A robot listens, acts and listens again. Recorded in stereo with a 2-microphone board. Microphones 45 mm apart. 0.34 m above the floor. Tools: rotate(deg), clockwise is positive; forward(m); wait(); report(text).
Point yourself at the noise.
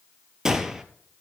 rotate(30)
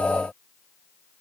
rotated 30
wait()
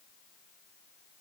report("I heard a gunshot, but can't make it out now. It was about 15° left or 135° right.")